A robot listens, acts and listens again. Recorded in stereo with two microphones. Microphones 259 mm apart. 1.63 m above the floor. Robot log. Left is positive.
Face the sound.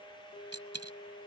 note: The dropped coin: about 70° right or 110° right.
cmd yaw -70
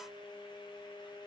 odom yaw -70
cmd idle
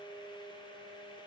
end: I heard a dropped coin, but can't make it out now. It was about straight ahead or 40° right.